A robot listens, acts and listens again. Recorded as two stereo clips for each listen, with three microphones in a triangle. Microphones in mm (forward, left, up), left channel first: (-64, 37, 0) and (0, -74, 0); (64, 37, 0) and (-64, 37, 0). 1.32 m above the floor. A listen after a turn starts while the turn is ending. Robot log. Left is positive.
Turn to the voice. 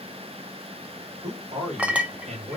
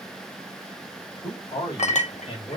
note: The man speaking: 35° right.
cmd yaw -35
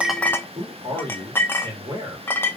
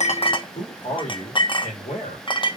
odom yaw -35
end: Facing the man speaking.